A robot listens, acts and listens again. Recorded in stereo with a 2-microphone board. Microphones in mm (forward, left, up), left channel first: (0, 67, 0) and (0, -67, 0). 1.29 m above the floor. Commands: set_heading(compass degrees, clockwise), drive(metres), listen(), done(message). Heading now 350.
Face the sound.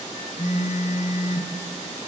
set_heading(280)
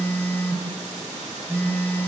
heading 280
set_heading(265)
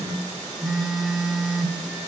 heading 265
done("Found it: a phone buzzing, straight ahead.")